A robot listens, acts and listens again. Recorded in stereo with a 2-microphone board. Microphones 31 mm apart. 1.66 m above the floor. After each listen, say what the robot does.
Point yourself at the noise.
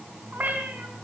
Turn 70° right.
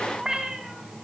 Turn 20° right.
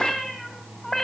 Turn 10° left.
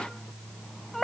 Facing the cat meowing, 2 to 4 m away.